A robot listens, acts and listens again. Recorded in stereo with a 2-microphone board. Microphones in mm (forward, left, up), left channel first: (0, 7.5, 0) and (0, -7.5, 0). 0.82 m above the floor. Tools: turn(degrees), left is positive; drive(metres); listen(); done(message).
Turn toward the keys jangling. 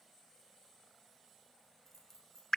turn(degrees=15)
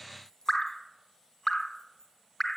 turn(degrees=40)
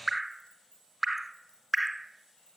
turn(degrees=95)
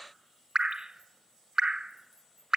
listen()
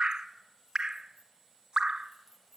turn(degrees=-20)
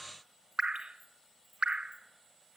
listen()
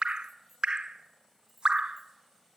done("Facing the keys jangling, over 4 m away.")